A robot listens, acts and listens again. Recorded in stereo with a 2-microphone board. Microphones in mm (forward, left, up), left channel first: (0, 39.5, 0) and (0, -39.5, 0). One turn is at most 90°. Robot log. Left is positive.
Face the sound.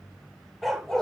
cmd yaw +30
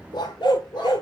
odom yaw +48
note: So it is at 105° left.
cmd yaw +90
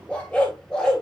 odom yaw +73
note: The dog barking is now 10° left.
cmd yaw +10
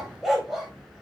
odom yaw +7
end: Facing the dog barking, 2 to 4 m away.